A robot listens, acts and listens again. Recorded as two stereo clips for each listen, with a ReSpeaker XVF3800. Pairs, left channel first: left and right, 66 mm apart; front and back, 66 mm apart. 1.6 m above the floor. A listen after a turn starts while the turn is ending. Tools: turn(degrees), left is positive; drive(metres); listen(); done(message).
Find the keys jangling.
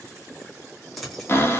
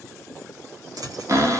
turn(degrees=180)
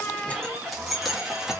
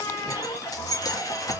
turn(degrees=-10)
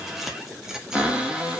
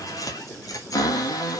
turn(degrees=-10)
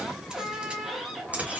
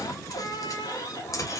turn(degrees=-25)
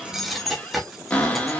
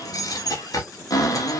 done("Found it: keys jangling, straight ahead.")